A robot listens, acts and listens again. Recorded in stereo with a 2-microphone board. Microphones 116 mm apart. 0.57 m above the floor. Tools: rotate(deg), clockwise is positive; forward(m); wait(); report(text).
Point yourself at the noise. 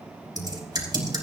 rotate(35)
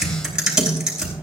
report("Facing the typing on a keyboard, over 4 m away.")